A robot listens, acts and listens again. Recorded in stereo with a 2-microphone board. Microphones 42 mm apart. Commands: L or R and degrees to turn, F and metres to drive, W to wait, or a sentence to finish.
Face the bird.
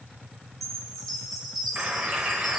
R30
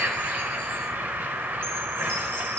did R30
R115
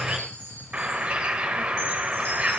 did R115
R30
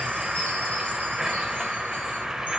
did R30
R10
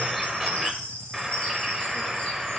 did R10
Facing the bird.